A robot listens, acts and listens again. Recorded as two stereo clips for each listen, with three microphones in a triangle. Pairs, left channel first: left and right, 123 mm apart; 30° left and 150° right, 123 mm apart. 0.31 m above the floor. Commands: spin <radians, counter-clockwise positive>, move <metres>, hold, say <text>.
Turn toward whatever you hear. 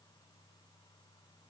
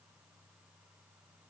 hold
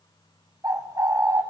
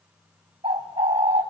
spin -2.62
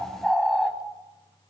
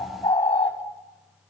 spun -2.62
say Facing the bird.